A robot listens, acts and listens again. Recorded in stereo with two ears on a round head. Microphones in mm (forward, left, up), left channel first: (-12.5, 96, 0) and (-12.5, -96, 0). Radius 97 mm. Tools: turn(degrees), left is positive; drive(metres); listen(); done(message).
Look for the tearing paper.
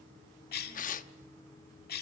turn(degrees=40)
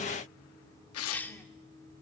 turn(degrees=100)
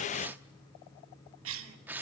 turn(degrees=-10)
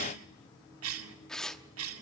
done("Facing the tearing paper.")